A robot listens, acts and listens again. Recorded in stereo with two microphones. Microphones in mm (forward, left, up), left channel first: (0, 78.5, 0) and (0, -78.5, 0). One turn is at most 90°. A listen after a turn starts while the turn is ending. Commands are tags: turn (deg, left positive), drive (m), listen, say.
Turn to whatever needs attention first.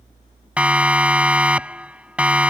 <turn deg="-30"/>
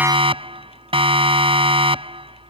<turn deg="-90"/>
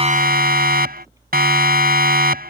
<turn deg="-85"/>
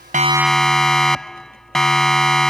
<say>Found it: a siren, straight ahead.</say>